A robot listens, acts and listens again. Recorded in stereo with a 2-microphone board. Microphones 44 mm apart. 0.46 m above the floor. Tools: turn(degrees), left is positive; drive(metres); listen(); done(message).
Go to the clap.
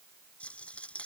listen()
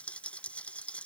listen()
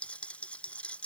done("I can't make out a clap, only a rattle.")